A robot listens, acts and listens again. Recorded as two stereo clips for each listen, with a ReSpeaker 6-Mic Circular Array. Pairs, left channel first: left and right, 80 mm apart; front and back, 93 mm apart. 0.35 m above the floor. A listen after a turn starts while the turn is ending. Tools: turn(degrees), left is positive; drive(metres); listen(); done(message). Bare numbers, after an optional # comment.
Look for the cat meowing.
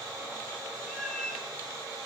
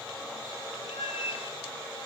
done("Facing the cat meowing.")